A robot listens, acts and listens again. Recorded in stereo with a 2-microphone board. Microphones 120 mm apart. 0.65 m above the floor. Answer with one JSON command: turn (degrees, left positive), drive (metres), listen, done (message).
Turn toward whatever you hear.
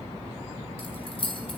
{"turn": 50}
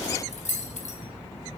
{"turn": 80}
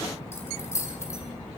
{"turn": 25}
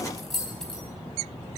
{"done": "Facing the keys jangling, 2 to 4 m away."}